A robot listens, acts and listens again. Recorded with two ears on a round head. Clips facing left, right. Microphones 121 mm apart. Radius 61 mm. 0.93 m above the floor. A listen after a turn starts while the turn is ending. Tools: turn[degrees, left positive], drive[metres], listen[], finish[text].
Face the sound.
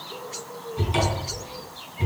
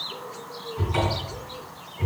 Thought: The cupboard door: about 30° left or 150° left.
Action: turn[30]
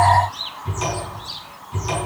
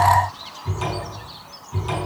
Action: finish[Found it: a cupboard door, straight ahead, over 4 m away.]